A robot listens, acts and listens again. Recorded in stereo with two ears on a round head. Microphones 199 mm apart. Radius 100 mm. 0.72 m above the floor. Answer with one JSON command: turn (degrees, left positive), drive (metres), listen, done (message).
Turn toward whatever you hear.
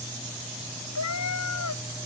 {"turn": 90}
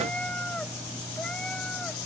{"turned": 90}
{"done": "Found it: a cat meowing, straight ahead."}